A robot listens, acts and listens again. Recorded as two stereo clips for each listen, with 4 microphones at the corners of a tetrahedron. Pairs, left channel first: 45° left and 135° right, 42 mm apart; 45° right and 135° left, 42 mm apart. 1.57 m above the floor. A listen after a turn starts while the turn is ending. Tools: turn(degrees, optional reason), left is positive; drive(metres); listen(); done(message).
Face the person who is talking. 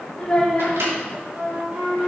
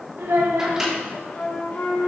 turn(degrees=120, reason="The child speaking: 120° left.")
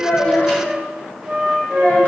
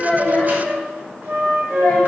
listen()
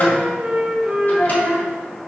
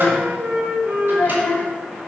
done("Facing the child speaking.")